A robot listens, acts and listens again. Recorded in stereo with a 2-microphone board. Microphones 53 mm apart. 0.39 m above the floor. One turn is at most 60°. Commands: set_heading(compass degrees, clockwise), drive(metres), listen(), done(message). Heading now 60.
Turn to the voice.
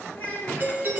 set_heading(30)
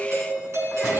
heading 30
listen()
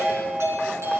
listen()
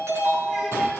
done("I heard a child speaking, but can't make it out now. It was about straight ahead or 120° left.")